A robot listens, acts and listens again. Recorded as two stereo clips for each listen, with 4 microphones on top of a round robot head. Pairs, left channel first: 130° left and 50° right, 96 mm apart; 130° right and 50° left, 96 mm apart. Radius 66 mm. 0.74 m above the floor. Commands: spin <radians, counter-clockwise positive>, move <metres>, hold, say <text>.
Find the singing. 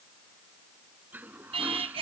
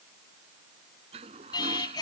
spin -1.40
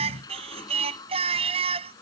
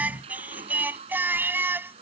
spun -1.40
spin -0.35
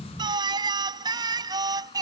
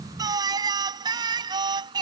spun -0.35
say Found it: singing, straight ahead.